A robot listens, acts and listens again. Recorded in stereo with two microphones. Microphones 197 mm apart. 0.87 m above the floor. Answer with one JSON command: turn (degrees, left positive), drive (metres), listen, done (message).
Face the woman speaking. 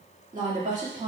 {"turn": -35}
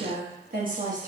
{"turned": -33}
{"turn": -40}
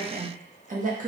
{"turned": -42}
{"turn": -40}
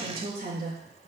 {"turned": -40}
{"turn": -130}
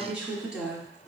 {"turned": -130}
{"done": "Found it: a woman speaking, straight ahead, 1 to 2 m away."}